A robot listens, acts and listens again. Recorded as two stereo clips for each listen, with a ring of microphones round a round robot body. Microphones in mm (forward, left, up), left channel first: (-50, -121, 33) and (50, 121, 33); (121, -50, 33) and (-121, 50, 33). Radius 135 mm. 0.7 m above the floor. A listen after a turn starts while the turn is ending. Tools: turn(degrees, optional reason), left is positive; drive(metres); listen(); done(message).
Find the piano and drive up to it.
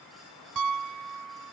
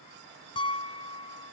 turn(degrees=50, reason="The piano: 50° left.")
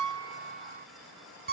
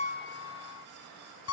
turn(degrees=15, reason="The piano is now 15° left.")
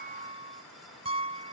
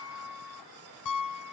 drive(metres=1.0)
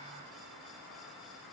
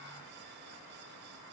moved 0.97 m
listen()
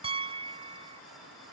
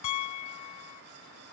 drive(metres=1.0)
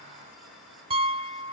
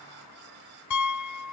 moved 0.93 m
drive(metres=1.0)
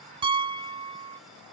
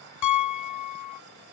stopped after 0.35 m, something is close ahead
done("I am next to the piano.")